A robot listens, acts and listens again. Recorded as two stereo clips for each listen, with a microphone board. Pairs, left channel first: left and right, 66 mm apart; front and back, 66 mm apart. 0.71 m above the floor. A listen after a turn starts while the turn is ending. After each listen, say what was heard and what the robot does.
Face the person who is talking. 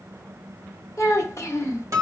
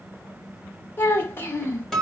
The child speaking: 50° left. Turn 50° left.
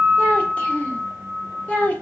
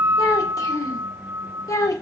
The child speaking is now 25° left. Turn 25° left.
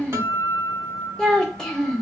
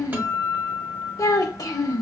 The child speaking is now 10° left. Turn 10° left.
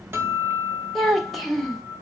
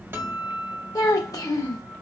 Found it: a child speaking, straight ahead.